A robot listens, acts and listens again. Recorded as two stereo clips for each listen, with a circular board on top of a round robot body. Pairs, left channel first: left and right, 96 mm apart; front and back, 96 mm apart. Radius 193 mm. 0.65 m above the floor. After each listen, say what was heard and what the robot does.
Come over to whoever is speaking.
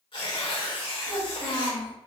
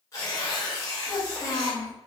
The child speaking: 100° left. Turn 100° left.
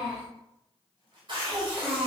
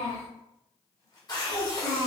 The child speaking is now 10° right. Turn 10° right.
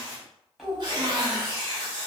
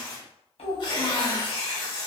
Drive 1.0 m forward.
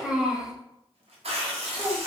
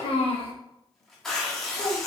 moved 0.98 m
Drive 1.0 m forward.
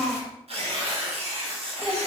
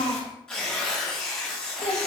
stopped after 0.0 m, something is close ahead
Arrived at the child speaking, straight ahead.